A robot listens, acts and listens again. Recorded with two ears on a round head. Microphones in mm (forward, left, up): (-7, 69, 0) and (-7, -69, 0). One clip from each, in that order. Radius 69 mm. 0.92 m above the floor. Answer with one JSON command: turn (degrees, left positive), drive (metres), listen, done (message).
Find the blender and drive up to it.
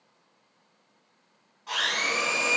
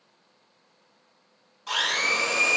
{"turn": -60}
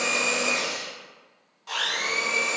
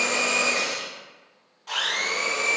{"drive": 1.0}
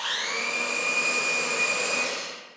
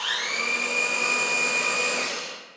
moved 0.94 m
{"drive": 1.0}
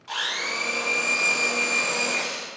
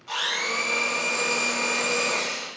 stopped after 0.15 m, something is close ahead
{"done": "Arrived at the blender, straight ahead."}